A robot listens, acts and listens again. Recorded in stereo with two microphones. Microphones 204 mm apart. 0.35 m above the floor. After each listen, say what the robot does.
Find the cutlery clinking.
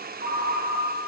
Keep listening.
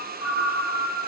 Keep listening.
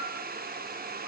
I can't make out cutlery clinking to turn to.